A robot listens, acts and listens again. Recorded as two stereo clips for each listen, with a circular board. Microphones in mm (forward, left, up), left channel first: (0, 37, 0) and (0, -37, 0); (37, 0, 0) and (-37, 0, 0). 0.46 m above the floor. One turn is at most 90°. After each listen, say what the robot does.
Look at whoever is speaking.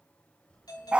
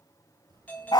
Turn 90° left.
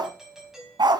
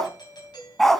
Turn 80° left.
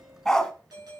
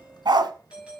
Facing the child speaking, 2 to 4 m away.